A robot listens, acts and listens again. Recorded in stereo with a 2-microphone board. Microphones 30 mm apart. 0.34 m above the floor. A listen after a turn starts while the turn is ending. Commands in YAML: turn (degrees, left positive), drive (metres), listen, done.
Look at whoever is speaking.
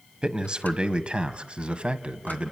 turn: -40
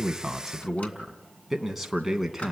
turn: -10
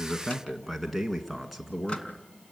done: "Facing the man speaking."